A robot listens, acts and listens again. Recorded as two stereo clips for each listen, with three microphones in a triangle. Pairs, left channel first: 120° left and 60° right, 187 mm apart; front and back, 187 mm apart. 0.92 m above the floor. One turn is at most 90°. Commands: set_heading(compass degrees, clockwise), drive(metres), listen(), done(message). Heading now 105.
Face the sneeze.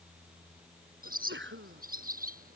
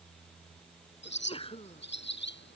set_heading(165)
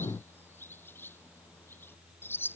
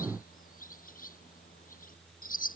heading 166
done("I heard a sneeze from this way, but can't make it out now.")